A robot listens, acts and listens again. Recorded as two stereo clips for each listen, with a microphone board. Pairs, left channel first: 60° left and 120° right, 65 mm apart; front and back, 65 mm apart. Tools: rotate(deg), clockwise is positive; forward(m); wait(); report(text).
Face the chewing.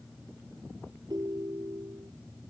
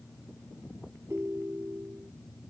wait()
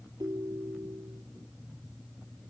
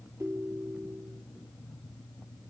wait()
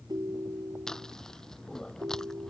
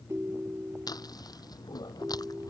rotate(25)
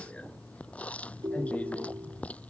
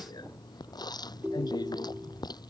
rotate(10)
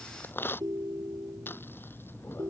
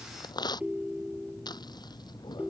report("Found it: chewing, straight ahead.")